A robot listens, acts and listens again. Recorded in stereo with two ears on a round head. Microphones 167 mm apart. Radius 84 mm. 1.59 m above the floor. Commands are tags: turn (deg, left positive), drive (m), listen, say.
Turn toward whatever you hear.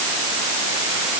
<listen/>
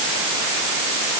<listen/>
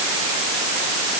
<say>I can't make out anything.</say>